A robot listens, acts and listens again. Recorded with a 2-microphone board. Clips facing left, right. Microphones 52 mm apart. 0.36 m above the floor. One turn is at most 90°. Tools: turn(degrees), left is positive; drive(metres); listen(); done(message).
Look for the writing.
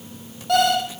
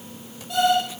listen()
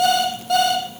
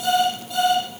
listen()
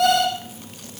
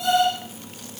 done("I can't make out writing, only an alarm clock.")